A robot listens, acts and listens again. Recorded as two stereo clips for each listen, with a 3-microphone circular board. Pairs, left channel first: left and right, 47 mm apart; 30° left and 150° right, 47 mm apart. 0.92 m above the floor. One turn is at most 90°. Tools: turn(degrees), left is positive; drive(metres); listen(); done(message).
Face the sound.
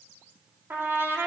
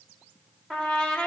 turn(degrees=-50)
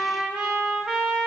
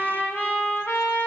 turn(degrees=-15)
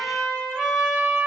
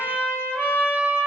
done("Found it: a trumpet, straight ahead.")